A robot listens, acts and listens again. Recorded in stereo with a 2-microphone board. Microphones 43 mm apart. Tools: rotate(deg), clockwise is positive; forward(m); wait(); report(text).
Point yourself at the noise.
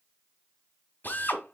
rotate(-40)
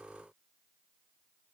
wait()
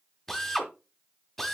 report("Facing the drill.")